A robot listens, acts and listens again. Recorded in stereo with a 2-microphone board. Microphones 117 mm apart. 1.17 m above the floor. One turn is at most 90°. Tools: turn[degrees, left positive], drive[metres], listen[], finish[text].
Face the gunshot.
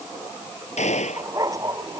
Action: turn[90]
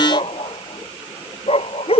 Action: finish[Facing where the gunshot came from. I can't hear it now.]